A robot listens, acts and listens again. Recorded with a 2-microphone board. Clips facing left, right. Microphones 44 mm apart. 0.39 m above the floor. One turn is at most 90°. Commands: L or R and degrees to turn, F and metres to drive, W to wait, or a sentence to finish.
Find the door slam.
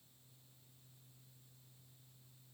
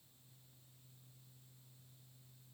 W
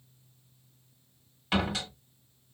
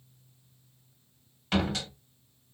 L30
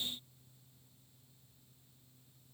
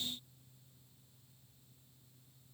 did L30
W
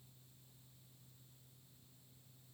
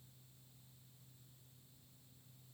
I heard a door slam, but can't make it out now. It was about 25° right or 145° left.